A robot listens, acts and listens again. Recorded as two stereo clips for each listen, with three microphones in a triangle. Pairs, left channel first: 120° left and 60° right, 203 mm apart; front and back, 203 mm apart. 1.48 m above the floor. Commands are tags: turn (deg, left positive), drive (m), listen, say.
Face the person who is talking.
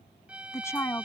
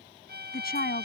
<turn deg="40"/>
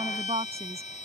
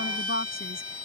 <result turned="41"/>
<say>Found it: a woman speaking, straight ahead.</say>